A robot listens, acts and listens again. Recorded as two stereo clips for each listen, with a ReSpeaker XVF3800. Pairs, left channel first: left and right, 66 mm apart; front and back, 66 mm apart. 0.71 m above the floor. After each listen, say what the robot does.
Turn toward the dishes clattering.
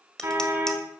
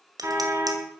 Turn 170° left.
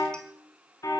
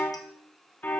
Keep listening.
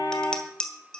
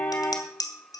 Turn 15° left.
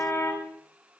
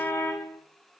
Found it: dishes clattering, straight ahead, 2 to 4 m away.